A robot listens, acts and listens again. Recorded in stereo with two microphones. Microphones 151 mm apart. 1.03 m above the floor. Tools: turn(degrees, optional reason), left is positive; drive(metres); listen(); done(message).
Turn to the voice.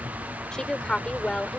turn(degrees=30)
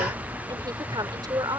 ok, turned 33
turn(degrees=-30, reason="So it is at 30° right.")
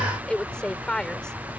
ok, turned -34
done("Facing the woman speaking.")